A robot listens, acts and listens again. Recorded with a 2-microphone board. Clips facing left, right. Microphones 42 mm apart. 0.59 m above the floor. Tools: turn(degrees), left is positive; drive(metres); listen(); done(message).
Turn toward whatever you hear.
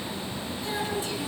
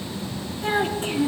turn(degrees=-45)
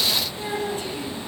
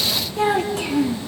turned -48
turn(degrees=-85)
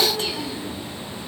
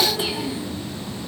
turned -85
turn(degrees=-15)
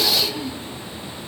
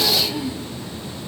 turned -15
turn(degrees=-10)
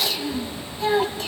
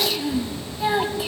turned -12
turn(degrees=-10)
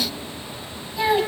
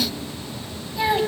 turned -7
done("Facing the child speaking, 2 to 4 m away.")